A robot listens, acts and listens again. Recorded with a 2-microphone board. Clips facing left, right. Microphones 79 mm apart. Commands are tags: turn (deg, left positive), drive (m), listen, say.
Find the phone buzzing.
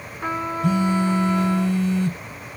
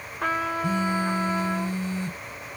<turn deg="65"/>
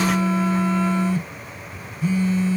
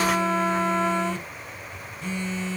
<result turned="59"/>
<say>Facing the phone buzzing.</say>